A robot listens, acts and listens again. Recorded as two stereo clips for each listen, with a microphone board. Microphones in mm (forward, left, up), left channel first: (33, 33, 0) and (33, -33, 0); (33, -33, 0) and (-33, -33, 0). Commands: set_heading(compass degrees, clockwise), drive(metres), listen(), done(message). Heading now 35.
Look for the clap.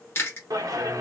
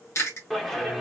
set_heading(120)
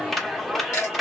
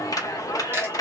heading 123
done("Facing the clap, under 1 m away.")